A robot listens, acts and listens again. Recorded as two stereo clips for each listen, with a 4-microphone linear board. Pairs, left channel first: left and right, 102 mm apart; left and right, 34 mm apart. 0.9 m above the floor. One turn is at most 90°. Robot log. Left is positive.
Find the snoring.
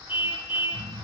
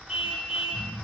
note: The snoring: about 55° right or 125° right.
cmd yaw -55
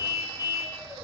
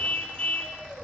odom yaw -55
cmd idle
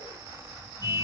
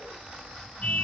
cmd idle
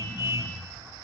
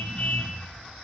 end: Found it: snoring, straight ahead.